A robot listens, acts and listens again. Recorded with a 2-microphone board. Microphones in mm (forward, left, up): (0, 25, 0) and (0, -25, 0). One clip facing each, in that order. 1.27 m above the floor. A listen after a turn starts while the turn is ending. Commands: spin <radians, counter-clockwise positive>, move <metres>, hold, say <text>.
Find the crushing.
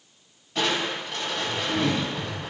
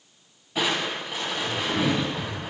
spin -0.52
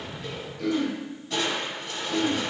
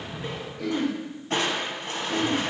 spin -2.36
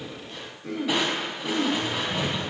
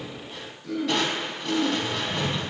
spin 0.26
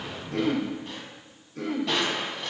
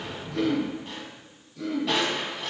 say Found it: crushing, straight ahead, 2 to 4 m away.